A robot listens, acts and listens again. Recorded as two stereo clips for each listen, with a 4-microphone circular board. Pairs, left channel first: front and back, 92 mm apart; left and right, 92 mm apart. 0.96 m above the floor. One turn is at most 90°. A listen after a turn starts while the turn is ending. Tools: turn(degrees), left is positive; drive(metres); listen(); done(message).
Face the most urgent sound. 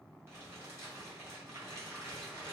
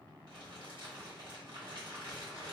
listen()
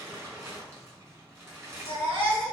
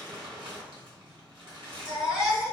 turn(degrees=-90)
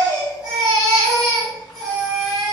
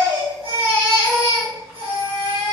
turn(degrees=-90)
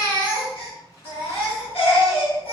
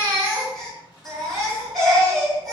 done("Found it: a baby crying, straight ahead.")